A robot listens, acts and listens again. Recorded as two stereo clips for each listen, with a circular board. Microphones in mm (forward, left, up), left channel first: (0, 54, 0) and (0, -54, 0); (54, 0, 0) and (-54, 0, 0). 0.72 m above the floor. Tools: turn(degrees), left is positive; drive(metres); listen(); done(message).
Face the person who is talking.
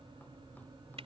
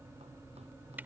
listen()
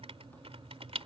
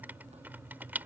listen()
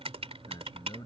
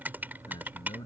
turn(degrees=45)
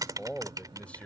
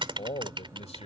turn(degrees=15)
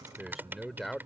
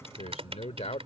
done("Found it: a man speaking, straight ahead.")